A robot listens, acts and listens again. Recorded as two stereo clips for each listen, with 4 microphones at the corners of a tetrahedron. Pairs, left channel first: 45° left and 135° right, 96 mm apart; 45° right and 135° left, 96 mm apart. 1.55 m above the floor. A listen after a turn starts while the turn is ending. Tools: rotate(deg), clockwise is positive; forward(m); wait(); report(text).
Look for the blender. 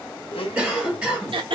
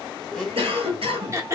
rotate(-40)
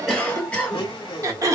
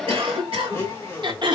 rotate(-15)
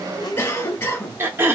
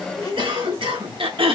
report("Facing the blender.")